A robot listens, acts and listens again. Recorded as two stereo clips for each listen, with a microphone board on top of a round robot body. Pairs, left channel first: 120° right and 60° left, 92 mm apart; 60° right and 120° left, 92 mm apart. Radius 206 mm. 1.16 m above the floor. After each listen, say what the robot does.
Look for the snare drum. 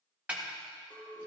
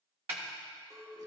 Turn 130° left.
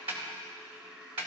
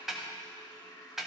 Turn 35° left.
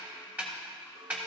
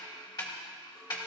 Turn 10° right.
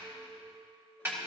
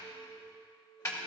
Found it: a snare drum, straight ahead, 1 to 2 m away.